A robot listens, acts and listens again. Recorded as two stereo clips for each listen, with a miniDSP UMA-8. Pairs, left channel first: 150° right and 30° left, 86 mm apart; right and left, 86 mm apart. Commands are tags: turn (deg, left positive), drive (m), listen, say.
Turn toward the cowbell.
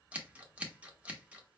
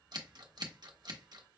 <listen/>
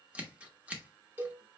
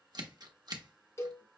<turn deg="-35"/>
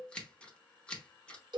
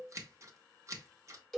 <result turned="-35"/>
<say>Facing the cowbell.</say>